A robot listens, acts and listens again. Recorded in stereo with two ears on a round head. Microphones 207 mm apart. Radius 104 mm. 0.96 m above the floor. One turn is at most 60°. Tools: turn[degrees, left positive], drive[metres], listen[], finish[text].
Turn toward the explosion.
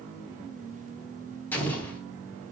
Action: turn[30]
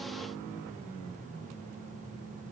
Action: listen[]
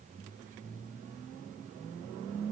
Action: finish[I heard an explosion, but can't make it out now. It was about 20° right or 140° left.]